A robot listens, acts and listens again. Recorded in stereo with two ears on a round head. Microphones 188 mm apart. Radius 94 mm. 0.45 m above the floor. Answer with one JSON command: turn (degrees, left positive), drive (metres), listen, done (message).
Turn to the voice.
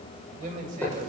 {"turn": -40}
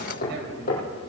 {"listen": true}
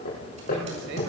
{"listen": true}
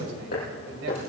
{"done": "I heard a man speaking, but can't make it out now. It was about straight ahead or 100° right."}